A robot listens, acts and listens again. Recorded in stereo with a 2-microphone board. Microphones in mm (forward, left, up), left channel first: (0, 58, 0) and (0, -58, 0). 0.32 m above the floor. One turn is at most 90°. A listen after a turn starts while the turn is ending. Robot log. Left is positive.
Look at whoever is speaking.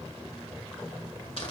cmd idle
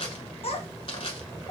note: The child speaking: about 60° left or 120° left.
cmd yaw +60
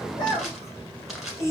note: So it is at 30° left.
cmd yaw +30
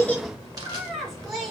end: Facing the child speaking.